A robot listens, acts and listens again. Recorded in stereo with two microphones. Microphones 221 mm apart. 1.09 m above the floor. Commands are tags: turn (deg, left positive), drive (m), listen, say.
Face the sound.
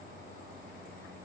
<listen/>
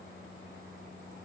<listen/>
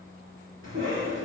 <turn deg="-65"/>
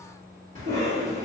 <turn deg="-40"/>
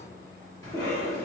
<turn deg="15"/>
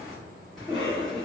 <say>Found it: a cough, straight ahead, 1 to 2 m away.</say>